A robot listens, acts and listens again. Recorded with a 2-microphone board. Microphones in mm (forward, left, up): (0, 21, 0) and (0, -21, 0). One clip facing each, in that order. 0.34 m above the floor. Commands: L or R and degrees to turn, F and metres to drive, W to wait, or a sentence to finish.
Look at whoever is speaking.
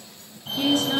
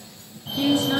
R30
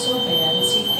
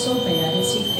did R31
W
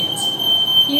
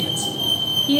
R130
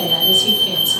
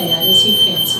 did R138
Found it: a woman speaking, straight ahead.